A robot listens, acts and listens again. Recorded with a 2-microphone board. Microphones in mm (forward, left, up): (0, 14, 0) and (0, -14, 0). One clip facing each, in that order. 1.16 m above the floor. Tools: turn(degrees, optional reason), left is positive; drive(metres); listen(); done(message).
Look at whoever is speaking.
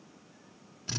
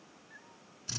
listen()
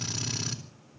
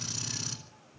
listen()
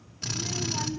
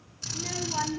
turn(degrees=-30, reason="The child speaking: about 30° right or 150° right.")
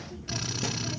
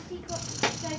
turn(degrees=-120, reason="So it is at 120° right.")
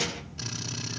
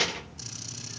turn(degrees=-35, reason="The child speaking is now 35° right.")
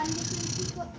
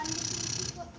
turn(degrees=15, reason="The child speaking is now 15° left.")
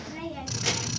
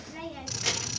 done("Found it: a child speaking, straight ahead.")